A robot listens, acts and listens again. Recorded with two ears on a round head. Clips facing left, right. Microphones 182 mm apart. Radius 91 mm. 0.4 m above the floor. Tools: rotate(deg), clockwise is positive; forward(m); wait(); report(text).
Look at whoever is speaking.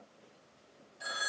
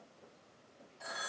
wait()
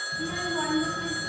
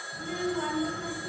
rotate(-70)
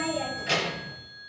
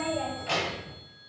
rotate(-20)
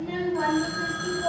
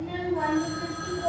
report("Found it: a child speaking, straight ahead, 1 to 2 m away.")